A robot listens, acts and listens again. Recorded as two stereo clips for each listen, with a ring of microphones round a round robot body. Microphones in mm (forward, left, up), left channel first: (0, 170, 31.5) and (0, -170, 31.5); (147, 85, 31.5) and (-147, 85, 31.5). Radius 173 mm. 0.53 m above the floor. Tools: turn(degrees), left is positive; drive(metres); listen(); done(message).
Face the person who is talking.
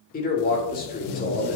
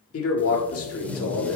turn(degrees=30)
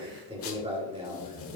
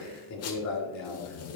turn(degrees=-20)
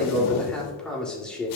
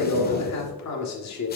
done("Facing the man speaking.")